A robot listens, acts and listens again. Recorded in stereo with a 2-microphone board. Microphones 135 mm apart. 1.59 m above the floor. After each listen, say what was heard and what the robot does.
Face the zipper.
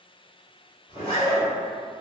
The zipper: about 35° left or 145° left. Turn 35° left.
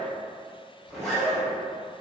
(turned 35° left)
Facing the zipper.